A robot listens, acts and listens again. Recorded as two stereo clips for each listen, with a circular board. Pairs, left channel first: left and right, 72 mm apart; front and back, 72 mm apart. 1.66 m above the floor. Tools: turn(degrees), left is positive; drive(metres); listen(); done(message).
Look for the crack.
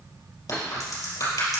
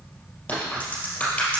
turn(degrees=70)
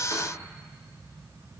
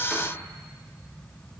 done("I heard a crack from this way, but can't make it out now.")